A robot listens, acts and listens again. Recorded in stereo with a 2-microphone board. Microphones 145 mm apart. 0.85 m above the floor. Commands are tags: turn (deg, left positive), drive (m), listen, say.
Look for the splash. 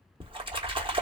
<turn deg="-35"/>
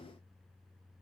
<listen/>
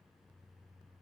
<say>I heard a splash, but can't make it out now. It was about straight ahead or 110° right.</say>